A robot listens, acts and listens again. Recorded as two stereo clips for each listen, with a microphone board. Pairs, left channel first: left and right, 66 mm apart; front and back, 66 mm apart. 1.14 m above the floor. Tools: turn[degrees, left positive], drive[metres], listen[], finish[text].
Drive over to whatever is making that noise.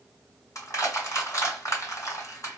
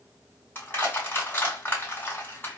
Thought: The crushing: 60° left.
Action: turn[60]
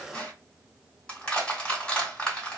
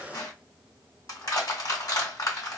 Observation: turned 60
Thought: The crushing is now 15° left.
Action: turn[15]
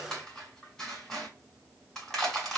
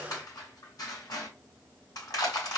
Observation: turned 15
Action: drive[1.0]
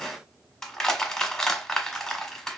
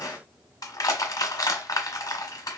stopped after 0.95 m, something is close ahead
Thought: The crushing is now 10° left.
Action: turn[10]
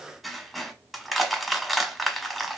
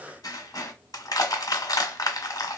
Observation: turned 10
Action: finish[I am next to the crushing.]